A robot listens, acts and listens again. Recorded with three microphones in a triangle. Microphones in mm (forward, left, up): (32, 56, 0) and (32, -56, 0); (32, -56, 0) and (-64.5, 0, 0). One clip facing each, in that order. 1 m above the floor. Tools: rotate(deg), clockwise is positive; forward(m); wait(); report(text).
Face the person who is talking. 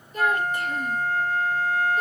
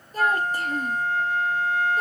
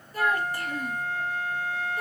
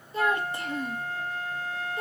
rotate(140)
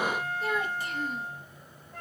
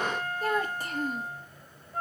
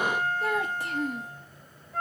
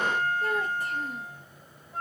rotate(40)
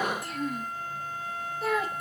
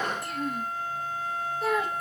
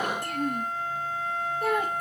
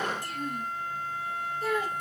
report("Facing the child speaking, under 1 m away.")